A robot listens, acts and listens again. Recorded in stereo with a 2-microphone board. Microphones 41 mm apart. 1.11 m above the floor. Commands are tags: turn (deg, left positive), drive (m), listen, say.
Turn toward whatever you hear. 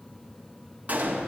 <turn deg="-40"/>
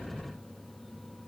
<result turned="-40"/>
<listen/>
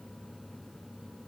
<say>I heard a gunshot, but can't make it out now. It was about straight ahead or 100° right.</say>